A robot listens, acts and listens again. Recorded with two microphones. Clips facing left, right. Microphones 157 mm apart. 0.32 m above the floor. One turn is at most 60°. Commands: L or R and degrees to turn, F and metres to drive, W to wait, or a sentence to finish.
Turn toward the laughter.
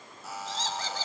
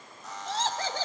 R60
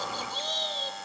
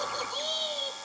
R10
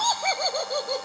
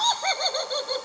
L15
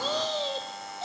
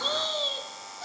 L25
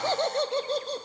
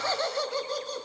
L30
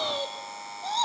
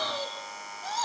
L25
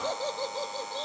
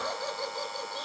L20
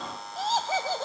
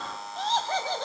Found it: laughter, straight ahead, 2 to 4 m away.